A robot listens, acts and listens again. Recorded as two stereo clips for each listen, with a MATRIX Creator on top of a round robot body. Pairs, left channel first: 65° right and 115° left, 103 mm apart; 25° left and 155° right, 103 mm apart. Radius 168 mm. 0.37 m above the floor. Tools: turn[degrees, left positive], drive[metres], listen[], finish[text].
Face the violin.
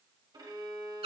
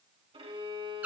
Thought: The violin: 165° left.
Action: turn[165]
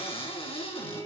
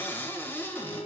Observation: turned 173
Thought: The violin is now 10° right.
Action: turn[-10]
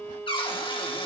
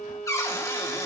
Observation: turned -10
Action: finish[Facing the violin, 1 to 2 m away.]